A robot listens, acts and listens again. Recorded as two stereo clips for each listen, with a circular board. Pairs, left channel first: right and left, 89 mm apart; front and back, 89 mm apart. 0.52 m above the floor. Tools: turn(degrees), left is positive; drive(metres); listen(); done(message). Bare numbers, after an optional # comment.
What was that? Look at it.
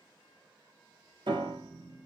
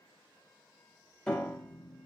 # The piano: 80° left.
turn(80)
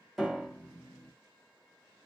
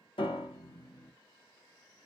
done("Found it: a piano, straight ahead, 1 to 2 m away.")